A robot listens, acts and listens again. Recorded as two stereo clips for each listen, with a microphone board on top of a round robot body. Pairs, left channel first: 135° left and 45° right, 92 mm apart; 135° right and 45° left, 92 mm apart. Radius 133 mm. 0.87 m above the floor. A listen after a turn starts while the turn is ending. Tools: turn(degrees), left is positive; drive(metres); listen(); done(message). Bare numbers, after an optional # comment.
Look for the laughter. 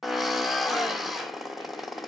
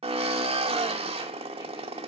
listen()
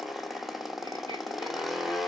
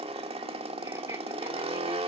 listen()
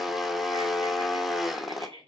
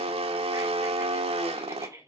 # The laughter: 15° right.
turn(-15)
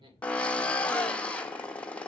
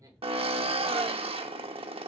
listen()
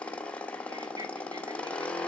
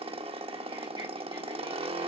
listen()
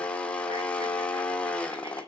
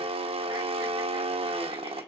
done("I heard laughter from this way, but can't make it out now.")